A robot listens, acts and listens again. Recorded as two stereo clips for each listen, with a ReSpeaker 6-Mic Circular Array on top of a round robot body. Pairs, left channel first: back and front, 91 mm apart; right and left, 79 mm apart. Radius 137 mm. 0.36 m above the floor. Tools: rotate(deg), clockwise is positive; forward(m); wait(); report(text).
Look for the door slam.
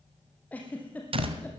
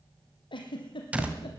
rotate(-15)
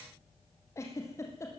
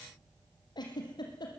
report("Facing where the door slam came from. I can't hear it now.")